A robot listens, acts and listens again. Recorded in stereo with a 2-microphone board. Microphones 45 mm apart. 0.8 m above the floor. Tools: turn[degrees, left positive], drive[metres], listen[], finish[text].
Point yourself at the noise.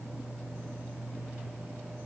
Action: listen[]
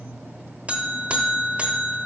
Thought: The buzzer: about 30° right or 150° right.
Action: turn[-30]
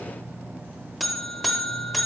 Action: finish[Facing the buzzer.]